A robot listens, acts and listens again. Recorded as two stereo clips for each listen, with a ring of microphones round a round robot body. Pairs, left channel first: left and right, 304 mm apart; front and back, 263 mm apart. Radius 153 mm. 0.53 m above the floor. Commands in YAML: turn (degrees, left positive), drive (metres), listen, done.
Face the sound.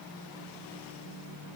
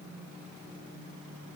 listen: true
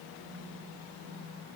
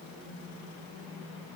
listen: true
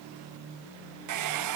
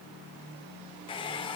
turn: -70
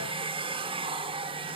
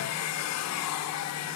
turn: -20
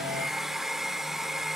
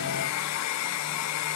done: "Found it: a hair dryer, straight ahead, under 1 m away."